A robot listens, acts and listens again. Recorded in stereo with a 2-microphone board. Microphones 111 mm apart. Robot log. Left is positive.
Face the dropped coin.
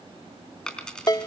cmd yaw +30
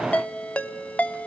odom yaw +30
cmd idle
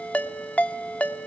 end: I heard a dropped coin, but can't make it out now. It was about 20° right or 140° left.